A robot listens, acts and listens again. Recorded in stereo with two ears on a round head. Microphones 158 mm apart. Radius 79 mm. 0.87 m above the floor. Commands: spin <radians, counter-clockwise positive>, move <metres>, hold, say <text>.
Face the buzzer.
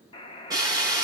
spin 0.52
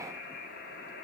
spin 2.09
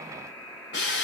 spin 0.26
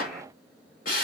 hold
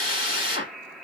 say Found it: a buzzer, straight ahead.